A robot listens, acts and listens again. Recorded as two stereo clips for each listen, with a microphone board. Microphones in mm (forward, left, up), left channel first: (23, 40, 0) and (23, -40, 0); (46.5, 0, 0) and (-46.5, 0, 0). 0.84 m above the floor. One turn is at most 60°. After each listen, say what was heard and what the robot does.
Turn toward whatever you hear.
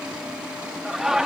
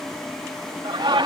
The laughter: 170° right. Turn 60° right.
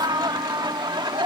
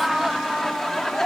The laughter is now 85° right. Turn 60° right.
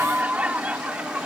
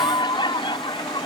The laughter is now 15° right. Turn 15° right.
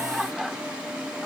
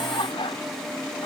Found it: laughter, straight ahead.